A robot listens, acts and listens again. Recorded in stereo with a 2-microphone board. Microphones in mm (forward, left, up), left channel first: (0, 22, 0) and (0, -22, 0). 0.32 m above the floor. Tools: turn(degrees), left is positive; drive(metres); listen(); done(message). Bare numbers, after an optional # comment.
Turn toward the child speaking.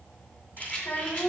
# The child speaking: about 45° left or 135° left.
turn(45)
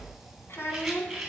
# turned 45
# So it is at 70° left.
turn(70)
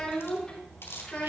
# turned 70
# The child speaking is now 20° left.
turn(20)
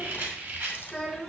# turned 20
done("Found it: a child speaking, straight ahead.")